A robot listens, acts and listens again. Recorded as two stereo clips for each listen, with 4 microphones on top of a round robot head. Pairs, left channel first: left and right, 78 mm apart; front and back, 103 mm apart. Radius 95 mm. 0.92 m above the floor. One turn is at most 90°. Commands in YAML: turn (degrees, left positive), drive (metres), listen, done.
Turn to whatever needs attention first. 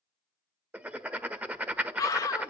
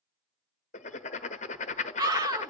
turn: 90
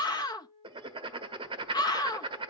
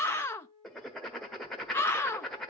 turn: 65
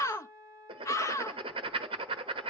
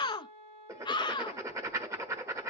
turn: 45
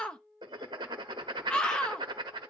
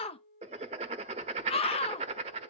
turn: 15
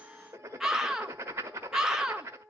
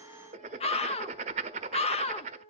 done: "Found it: a scream, straight ahead, under 1 m away."